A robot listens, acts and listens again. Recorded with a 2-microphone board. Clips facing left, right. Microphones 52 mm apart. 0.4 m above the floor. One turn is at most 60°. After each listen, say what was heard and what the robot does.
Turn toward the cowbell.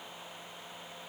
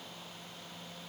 Keep listening.
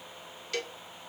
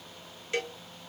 The cowbell: about 25° right or 155° right. Turn 25° right.
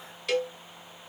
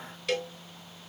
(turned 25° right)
Facing the cowbell, 1 to 2 m away.